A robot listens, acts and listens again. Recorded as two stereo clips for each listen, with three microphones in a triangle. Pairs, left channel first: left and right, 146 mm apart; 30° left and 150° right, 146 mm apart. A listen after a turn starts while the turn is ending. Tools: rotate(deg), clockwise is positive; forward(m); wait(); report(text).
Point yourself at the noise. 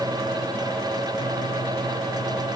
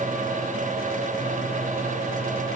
wait()
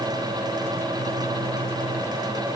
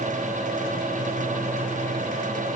wait()
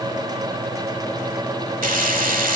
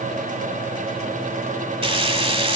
rotate(100)
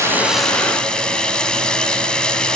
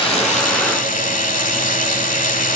report("Facing the frying.")